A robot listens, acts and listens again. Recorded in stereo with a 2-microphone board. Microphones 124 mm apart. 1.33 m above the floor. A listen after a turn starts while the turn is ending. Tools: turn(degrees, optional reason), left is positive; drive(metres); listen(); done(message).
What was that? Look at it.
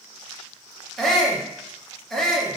turn(degrees=30)
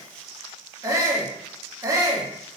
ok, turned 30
turn(degrees=-25, reason="So it is at 25° right.")
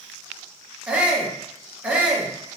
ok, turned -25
turn(degrees=-10, reason="The shout is now 10° right.")
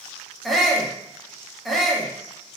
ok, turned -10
done("Found it: a shout, straight ahead.")